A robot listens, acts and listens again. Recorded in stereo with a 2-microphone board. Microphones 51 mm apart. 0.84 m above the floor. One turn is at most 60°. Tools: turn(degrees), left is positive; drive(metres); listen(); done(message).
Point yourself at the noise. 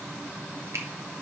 turn(degrees=-60)
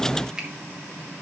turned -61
turn(degrees=-15)
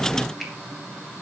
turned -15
listen()
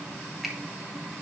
listen()
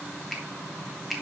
done("Found it: a finger snap, straight ahead, 1 to 2 m away.")